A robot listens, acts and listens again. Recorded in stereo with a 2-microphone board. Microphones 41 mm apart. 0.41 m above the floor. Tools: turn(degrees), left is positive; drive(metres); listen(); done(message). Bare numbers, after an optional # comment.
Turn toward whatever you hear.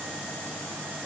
listen()
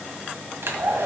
# The hair dryer: about 70° right or 110° right.
turn(-70)
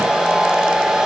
# So it is at 15° right.
turn(-15)
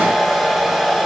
done("Facing the hair dryer, 1 to 2 m away.")